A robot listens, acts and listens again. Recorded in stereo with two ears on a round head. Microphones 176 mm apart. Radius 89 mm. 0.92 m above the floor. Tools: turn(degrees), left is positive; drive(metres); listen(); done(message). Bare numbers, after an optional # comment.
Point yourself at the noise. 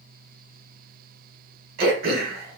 # The throat clearing: about 50° right or 130° right.
turn(-50)
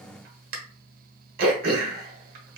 # So it is at 60° right.
turn(-60)
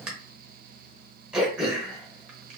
done("Found it: throat clearing, straight ahead.")